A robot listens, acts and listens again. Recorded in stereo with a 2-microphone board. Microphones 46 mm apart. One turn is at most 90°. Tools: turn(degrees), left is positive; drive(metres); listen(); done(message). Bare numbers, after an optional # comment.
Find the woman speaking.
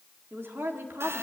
# The woman speaking: about 60° right or 120° right.
turn(-60)
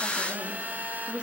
# So it is at 25° right.
turn(-25)
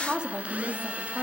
# The woman speaking is now 35° right.
turn(-35)
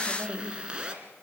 # The woman speaking is now 40° right.
turn(-40)
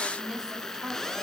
# The woman speaking is now 15° right.
turn(-15)
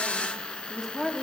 done("Facing the woman speaking.")